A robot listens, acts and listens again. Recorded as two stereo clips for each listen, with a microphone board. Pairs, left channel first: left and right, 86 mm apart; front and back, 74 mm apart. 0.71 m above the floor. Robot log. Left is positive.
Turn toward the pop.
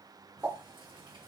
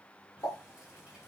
note: The pop: 30° right.
cmd yaw -30
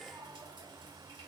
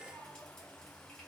end: I heard a pop from this way, but can't make it out now.